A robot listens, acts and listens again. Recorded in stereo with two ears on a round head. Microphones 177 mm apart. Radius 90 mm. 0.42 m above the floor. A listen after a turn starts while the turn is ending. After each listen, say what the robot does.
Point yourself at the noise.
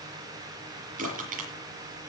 Turn 45° right.
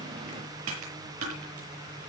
Turn 95° right.
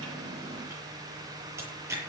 Turn 15° right.
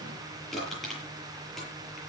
Facing the crushing.